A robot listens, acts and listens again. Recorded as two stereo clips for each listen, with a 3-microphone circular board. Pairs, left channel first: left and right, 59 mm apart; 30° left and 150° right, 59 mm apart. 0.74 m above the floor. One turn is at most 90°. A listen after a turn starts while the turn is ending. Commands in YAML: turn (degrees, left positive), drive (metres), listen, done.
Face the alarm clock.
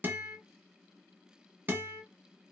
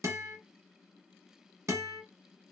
listen: true
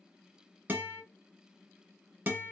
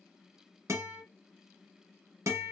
listen: true
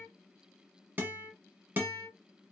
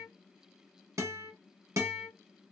done: "I can't make out an alarm clock to turn to."